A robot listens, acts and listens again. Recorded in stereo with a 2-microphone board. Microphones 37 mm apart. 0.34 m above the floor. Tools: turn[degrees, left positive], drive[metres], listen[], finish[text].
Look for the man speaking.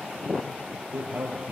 Thought: The man speaking: about 55° right or 125° right.
Action: turn[-55]
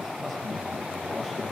Action: finish[Facing the man speaking.]